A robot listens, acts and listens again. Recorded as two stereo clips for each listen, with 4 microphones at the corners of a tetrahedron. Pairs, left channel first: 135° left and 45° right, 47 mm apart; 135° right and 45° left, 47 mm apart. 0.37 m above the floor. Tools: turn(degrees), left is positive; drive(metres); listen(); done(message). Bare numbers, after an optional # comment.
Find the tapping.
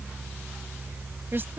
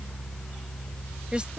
listen()
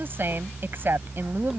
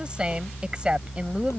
listen()
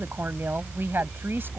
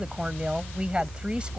done("I can't make out tapping, only a woman speaking.")